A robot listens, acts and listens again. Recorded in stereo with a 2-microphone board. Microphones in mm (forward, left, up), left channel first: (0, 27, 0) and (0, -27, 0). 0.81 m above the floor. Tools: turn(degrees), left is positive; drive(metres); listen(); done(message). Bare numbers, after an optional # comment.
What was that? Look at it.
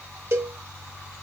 # The cowbell: about 55° right or 125° right.
turn(-55)
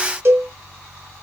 # So it is at 55° right.
turn(-55)
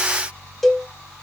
done("Found it: a cowbell, straight ahead.")